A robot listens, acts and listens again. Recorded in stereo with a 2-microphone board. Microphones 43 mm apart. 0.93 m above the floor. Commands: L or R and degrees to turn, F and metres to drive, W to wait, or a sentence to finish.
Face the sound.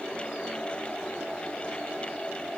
W
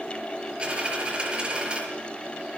R20
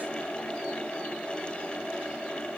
W
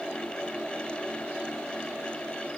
I heard a dropped coin, but can't make it out now. It was about straight ahead or 140° right.